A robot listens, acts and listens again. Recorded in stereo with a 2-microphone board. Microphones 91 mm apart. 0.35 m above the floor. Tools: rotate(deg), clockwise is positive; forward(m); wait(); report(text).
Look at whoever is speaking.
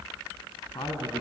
rotate(-55)
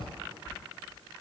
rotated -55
wait()
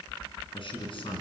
rotate(-60)
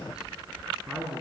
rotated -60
report("Found it: a man speaking, straight ahead, over 4 m away.")